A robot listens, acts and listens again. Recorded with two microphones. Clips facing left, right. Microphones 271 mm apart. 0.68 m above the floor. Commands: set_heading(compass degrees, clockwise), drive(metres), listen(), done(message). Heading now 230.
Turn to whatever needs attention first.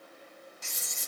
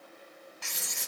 listen()
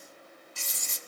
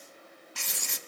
listen()
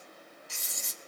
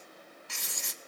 done("I can't make out anything urgent, only writing.")